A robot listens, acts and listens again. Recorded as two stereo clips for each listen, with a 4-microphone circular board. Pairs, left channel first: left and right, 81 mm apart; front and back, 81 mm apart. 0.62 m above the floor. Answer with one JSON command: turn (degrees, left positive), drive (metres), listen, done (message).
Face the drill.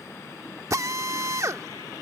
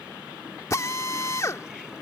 {"turn": -50}
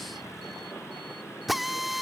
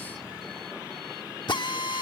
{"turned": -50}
{"done": "Facing the drill."}